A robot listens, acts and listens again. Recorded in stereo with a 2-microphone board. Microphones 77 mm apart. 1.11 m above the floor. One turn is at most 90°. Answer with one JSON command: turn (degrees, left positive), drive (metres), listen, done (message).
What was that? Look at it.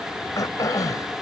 {"turn": 50}
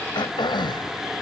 {"turn": 85}
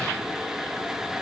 {"listen": true}
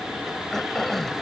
{"done": "Found it: throat clearing, straight ahead."}